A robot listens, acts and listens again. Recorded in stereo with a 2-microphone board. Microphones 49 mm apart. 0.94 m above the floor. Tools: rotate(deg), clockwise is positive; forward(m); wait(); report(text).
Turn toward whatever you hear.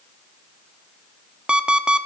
rotate(20)
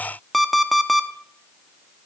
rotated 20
report("Facing the alarm clock.")